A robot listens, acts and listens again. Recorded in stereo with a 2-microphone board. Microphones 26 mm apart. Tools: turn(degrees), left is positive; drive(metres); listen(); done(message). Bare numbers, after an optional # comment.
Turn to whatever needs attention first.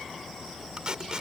listen()
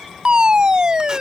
# The fire alarm: about 35° right or 145° right.
turn(-35)
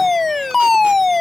done("Found it: a fire alarm, straight ahead.")